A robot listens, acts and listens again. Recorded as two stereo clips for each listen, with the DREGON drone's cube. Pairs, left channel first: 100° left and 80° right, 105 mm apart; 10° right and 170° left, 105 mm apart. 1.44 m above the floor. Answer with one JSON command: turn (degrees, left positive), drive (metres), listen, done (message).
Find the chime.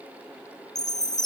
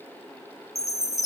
{"turn": 45}
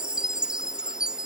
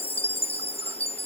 {"done": "Found it: a chime, straight ahead."}